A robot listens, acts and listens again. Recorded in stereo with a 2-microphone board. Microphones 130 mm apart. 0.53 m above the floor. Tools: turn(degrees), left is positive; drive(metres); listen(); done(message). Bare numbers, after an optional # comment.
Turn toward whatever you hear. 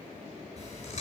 # The chewing: about 60° left or 120° left.
turn(60)
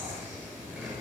done("Found it: chewing, straight ahead, over 4 m away.")